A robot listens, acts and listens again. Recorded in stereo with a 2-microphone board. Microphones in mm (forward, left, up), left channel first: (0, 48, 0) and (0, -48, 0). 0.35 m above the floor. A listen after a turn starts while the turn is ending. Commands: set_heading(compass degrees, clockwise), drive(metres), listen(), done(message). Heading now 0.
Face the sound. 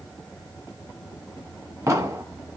set_heading(35)
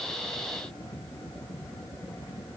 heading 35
listen()
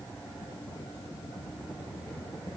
done("I heard an explosion, but can't make it out now. It was about straight ahead or 110° right.")